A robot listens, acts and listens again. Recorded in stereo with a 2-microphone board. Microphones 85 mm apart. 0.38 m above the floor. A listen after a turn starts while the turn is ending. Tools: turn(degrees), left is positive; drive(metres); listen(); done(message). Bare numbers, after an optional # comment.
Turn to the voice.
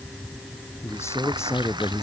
# The man speaking: about 35° left or 145° left.
turn(35)
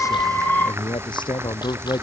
# So it is at 110° left.
turn(110)
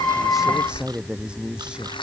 # The man speaking is now 10° right.
turn(-10)
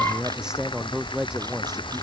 # The man speaking is now 10° right.
turn(-10)
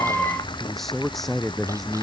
done("Facing the man speaking.")